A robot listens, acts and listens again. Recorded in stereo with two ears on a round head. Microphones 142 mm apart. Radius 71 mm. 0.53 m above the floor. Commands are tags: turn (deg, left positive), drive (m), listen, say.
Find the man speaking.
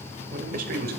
<turn deg="-60"/>
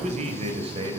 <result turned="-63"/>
<turn deg="-30"/>
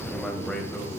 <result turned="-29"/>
<turn deg="10"/>
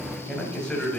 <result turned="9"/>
<turn deg="10"/>
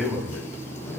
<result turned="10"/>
<say>Found it: a man speaking, straight ahead, 2 to 4 m away.</say>